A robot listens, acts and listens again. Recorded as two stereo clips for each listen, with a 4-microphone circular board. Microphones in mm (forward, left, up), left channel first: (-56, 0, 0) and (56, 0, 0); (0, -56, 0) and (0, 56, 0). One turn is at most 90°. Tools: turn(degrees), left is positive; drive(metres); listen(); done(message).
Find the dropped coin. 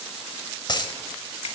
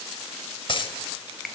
turn(degrees=-90)
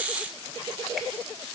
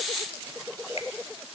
turn(degrees=-40)
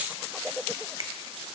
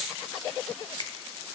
done("Facing where the dropped coin came from. I can't hear it now.")